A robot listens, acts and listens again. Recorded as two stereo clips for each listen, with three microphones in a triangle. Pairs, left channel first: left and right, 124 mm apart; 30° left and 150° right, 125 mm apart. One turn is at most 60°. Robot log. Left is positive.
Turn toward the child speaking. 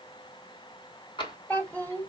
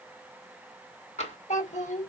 note: The child speaking: 15° left.
cmd yaw +15
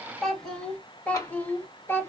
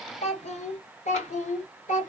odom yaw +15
note: The child speaking is now 20° left.
cmd yaw +20
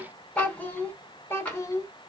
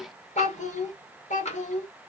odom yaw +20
note: The child speaking is now 25° left.
cmd yaw +25
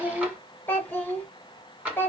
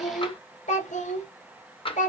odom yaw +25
note: The child speaking is now 15° left.
cmd yaw +15
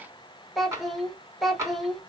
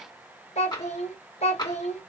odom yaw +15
end: Found it: a child speaking, straight ahead.